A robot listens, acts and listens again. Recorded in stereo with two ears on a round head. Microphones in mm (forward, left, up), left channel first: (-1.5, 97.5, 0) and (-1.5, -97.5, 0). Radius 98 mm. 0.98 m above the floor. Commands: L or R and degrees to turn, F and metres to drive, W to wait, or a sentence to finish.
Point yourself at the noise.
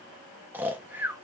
R30
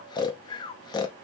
L20
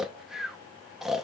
Facing the snoring, under 1 m away.